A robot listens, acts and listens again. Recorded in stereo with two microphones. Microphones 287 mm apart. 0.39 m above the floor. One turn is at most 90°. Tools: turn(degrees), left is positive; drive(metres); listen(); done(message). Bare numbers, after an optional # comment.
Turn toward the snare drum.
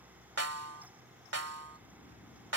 # The snare drum: about 60° right or 120° right.
turn(-60)
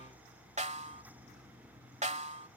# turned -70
# So it is at 30° right.
turn(-30)
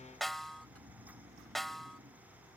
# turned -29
done("Found it: a snare drum, straight ahead.")